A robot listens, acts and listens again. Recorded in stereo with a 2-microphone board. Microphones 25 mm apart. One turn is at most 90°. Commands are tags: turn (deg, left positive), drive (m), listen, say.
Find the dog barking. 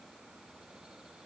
<listen/>
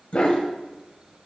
<turn deg="45"/>
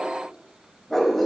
<turn deg="10"/>
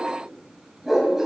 <turn deg="-10"/>
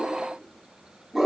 <turn deg="-10"/>
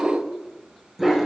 <say>Facing the dog barking.</say>